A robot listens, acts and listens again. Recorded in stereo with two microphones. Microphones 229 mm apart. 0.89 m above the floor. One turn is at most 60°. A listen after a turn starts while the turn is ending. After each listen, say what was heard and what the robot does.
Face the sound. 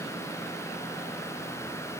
Keep listening.
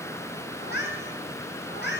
The cat meowing: about 50° left or 130° left. Turn 50° left.
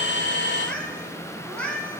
Facing the cat meowing.